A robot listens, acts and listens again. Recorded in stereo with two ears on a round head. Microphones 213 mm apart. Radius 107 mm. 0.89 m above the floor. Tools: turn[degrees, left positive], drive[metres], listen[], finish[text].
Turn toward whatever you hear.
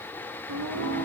Thought: The singing: about 65° right or 115° right.
Action: turn[-65]
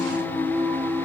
Thought: So it is at 15° left.
Action: turn[15]
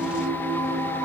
Thought: The singing is now 15° left.
Action: turn[15]
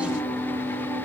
Thought: The singing is now 10° left.
Action: turn[10]
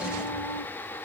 Action: finish[Facing the singing.]